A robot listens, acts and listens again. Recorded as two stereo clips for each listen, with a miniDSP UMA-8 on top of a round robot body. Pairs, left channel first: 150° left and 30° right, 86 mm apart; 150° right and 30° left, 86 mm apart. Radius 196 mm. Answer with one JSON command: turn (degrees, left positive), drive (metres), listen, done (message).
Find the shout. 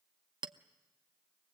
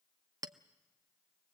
{"listen": true}
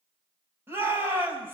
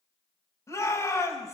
{"turn": -95}
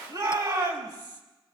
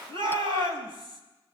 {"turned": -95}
{"turn": 10}
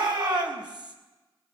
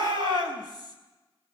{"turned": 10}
{"done": "Facing the shout, over 4 m away."}